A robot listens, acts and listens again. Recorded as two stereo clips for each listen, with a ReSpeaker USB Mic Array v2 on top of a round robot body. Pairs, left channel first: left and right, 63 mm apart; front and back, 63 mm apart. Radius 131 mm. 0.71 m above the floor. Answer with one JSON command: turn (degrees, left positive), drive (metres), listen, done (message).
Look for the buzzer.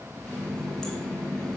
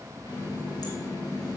{"listen": true}
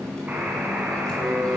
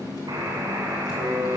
{"turn": -160}
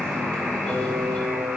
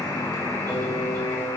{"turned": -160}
{"done": "Found it: a buzzer, straight ahead."}